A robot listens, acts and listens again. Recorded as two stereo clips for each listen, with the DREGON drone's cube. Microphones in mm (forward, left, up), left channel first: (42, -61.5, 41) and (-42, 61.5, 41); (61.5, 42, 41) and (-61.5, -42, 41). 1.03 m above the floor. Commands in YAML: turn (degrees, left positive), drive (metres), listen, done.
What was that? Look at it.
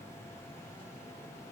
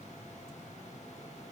listen: true
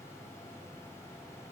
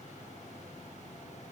listen: true
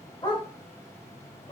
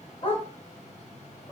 done: "Facing the dog barking."